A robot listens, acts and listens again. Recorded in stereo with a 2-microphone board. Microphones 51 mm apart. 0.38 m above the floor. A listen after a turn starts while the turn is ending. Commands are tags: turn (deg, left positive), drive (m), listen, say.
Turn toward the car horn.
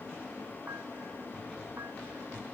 <listen/>
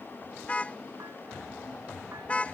<turn deg="25"/>
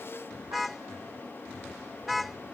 <say>Facing the car horn.</say>